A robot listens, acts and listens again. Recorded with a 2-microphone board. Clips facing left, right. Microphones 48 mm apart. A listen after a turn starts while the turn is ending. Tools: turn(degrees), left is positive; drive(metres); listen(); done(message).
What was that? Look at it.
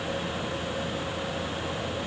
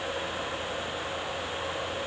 listen()
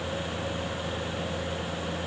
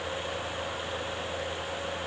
listen()
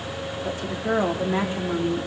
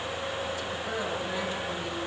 turn(degrees=30)
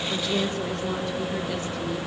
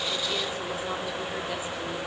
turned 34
done("Facing the woman speaking, 2 to 4 m away.")